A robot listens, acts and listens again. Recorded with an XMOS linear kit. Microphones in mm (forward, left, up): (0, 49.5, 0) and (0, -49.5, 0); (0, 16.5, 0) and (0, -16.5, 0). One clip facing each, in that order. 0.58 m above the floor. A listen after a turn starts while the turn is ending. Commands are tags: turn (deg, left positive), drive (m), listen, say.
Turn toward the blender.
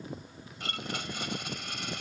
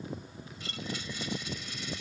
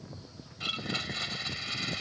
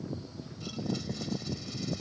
<turn deg="65"/>
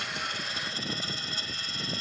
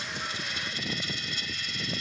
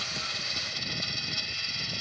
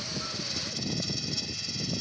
<turn deg="40"/>
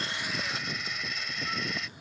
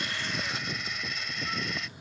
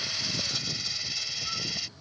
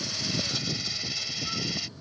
<say>Found it: a blender, straight ahead.</say>